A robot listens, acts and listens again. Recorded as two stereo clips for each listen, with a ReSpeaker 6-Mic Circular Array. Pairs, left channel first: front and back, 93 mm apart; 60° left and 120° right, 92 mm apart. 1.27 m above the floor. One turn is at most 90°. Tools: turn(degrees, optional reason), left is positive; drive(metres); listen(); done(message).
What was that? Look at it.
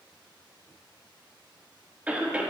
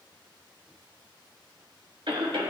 turn(degrees=-90, reason="The cough: 110° right.")
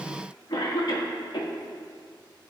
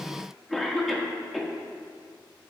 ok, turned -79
turn(degrees=-25, reason="The cough is now 25° right.")
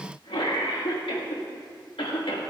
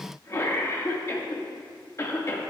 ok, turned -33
done("Facing the cough.")